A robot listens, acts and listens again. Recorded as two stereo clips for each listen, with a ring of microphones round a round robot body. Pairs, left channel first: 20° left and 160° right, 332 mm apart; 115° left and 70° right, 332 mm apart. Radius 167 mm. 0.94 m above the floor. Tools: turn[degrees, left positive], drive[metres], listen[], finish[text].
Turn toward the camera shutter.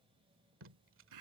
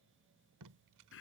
Action: listen[]
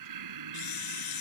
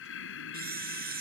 Action: finish[Found it: a camera shutter, straight ahead.]